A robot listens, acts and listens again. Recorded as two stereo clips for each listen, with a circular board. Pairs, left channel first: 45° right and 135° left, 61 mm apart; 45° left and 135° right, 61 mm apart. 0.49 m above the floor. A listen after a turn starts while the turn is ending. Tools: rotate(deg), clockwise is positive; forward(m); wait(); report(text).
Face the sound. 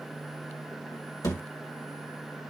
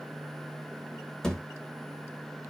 rotate(35)
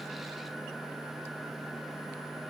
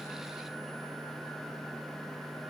report("I heard a thud from this way, but can't make it out now.")